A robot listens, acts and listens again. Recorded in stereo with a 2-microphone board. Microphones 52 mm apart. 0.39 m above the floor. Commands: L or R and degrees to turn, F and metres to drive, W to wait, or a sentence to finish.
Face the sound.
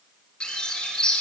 L20
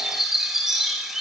Facing the bird.